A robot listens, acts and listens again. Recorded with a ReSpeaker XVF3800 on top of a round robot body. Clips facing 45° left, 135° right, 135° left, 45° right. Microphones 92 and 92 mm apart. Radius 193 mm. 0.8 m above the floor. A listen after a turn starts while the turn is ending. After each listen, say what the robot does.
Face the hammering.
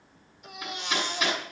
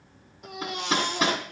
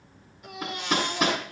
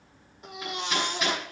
Turn 175° left.
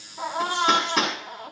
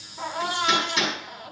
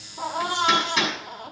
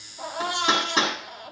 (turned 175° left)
Turn 15° left.
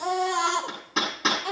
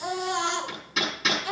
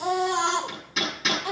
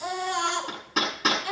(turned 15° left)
Facing the hammering, over 4 m away.